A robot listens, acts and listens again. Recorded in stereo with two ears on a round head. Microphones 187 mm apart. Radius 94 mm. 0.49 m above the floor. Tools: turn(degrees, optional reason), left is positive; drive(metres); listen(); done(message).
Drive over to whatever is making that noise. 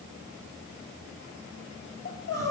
turn(degrees=60, reason="The crying: about 60° left or 120° left.")
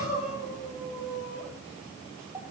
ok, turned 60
drive(metres=1.0)
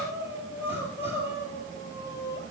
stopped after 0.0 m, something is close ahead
turn(degrees=-10, reason="The crying is now 10° right.")
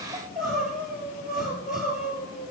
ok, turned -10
done("Blocked. The crying is further on, straight ahead.")